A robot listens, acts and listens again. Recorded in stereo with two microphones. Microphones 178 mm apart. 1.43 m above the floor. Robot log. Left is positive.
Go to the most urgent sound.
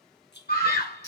note: The scream: about 60° left or 120° left.
cmd yaw +60
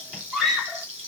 cmd fwd 1.0
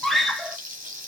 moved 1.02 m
cmd fwd 1.0
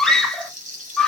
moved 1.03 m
cmd fwd 1.0
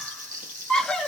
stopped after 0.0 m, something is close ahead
end: Arrived at the scream, straight ahead.